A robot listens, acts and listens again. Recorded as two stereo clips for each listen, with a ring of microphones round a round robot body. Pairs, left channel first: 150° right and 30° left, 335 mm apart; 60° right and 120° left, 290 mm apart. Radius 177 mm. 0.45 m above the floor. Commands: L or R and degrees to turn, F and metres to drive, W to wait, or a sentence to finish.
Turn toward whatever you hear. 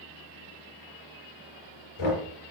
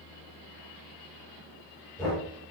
R140
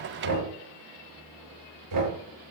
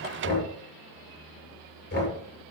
Found it: knocking, straight ahead, over 4 m away.